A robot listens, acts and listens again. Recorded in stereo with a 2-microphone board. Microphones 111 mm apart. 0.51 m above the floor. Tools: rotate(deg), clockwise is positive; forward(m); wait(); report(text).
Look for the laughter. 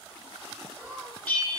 rotate(20)
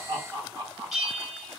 rotate(35)
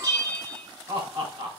rotate(120)
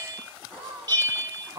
rotate(25)
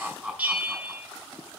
report("Found it: laughter, straight ahead.")